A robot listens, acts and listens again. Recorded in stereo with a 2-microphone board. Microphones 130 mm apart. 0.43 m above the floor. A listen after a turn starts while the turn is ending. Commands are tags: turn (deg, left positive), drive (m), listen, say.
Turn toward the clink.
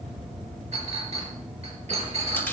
<turn deg="-55"/>
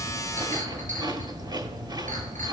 <listen/>
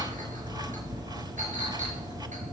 <listen/>
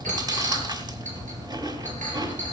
<turn deg="-75"/>
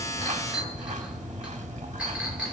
<turn deg="-10"/>
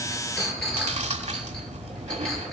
<say>Found it: a clink, straight ahead, over 4 m away.</say>